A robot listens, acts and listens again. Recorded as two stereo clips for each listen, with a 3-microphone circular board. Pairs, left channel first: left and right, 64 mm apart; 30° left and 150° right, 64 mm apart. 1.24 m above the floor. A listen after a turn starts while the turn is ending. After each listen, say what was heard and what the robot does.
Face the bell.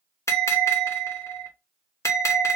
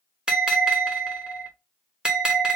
The bell: 135° left. Turn 135° left.
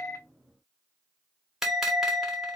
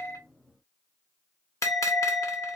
Facing the bell.